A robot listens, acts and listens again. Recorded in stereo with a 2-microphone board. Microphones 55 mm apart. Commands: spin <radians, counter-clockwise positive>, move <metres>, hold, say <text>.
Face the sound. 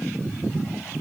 hold
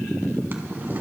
spin -0.61
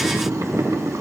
spin -1.83
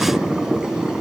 spin -0.26
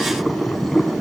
say Facing the boiling.